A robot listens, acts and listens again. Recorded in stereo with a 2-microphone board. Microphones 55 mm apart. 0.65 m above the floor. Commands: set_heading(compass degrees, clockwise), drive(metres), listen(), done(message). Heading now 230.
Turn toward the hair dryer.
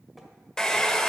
set_heading(200)
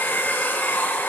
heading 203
set_heading(63)
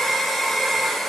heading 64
done("Found it: a hair dryer, straight ahead, under 1 m away.")